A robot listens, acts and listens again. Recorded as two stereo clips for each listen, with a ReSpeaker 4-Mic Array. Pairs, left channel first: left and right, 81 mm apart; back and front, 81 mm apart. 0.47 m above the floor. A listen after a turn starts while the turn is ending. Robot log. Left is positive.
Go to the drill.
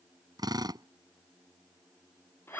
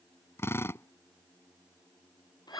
note: The drill: 120° right.
cmd yaw -120
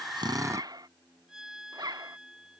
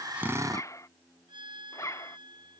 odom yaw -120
note: The drill is now 40° right.
cmd yaw -40
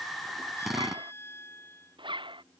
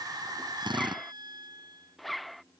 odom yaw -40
cmd fwd 1.0
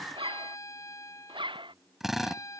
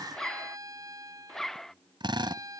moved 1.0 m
cmd fwd 1.0
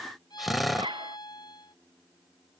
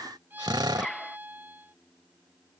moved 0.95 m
cmd fwd 1.0
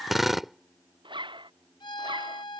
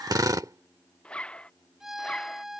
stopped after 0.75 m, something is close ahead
end: I am next to the drill.